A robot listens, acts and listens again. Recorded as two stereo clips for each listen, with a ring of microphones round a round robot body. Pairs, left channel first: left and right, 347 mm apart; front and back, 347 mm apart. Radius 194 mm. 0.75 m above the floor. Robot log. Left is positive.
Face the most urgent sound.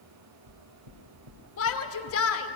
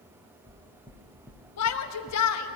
note: The shout: 40° left.
cmd yaw +40
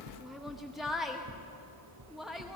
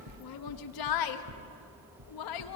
end: Facing the shout.